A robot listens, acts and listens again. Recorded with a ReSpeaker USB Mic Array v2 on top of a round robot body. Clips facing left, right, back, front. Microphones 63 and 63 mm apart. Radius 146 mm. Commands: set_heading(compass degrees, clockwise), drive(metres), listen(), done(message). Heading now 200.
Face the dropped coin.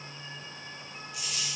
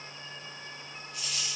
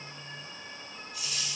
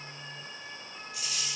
set_heading(190)
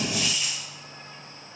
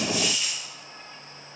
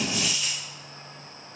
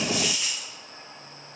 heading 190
done("Found it: a dropped coin, straight ahead.")